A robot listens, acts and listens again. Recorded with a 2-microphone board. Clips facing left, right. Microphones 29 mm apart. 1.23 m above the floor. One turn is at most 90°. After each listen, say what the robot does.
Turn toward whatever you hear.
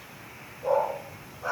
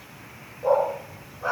Turn 25° right.
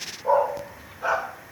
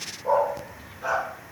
Turn 25° left.
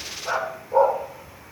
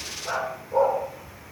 Turn 25° left.
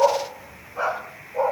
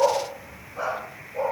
Turn 20° left.
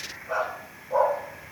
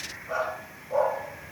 Found it: a dog barking, straight ahead.